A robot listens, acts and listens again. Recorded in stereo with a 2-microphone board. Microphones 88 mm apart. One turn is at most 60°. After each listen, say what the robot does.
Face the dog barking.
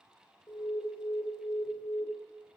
Keep listening.
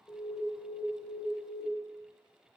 Keep listening.
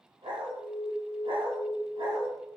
Turn 60° right.
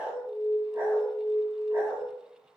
Turn 25° right.
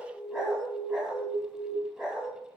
Facing the dog barking.